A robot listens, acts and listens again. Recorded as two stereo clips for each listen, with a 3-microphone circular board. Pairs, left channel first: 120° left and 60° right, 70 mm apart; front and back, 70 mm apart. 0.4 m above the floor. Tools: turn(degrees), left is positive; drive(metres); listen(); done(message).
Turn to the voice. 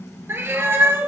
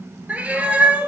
listen()
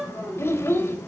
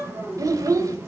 turn(degrees=165)
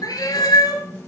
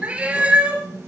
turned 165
listen()
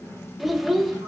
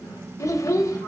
turn(degrees=25)
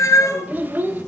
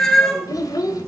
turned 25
done("Found it: a child speaking, straight ahead, under 1 m away.")